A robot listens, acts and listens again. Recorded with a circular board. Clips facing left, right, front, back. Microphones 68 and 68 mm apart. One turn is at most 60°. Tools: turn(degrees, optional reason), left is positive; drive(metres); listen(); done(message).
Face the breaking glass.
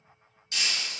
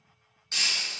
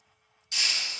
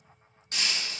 turn(degrees=-60, reason="The breaking glass: 140° right.")
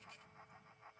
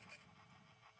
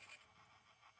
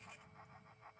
turn(degrees=-60, reason="Nothing new. It was at 80° right.")
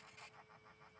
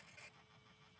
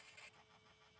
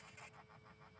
turn(degrees=-20, reason="Nothing new. It was at 20° right.")
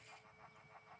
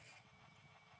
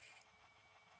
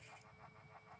done("Facing where the breaking glass came from. I can't hear it now.")